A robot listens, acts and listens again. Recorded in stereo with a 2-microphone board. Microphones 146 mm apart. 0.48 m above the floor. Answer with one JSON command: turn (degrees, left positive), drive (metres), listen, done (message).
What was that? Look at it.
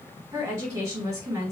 {"turn": -25}
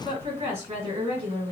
{"turn": -125}
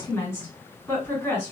{"turn": 25}
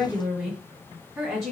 {"done": "Found it: a woman speaking, straight ahead, 1 to 2 m away."}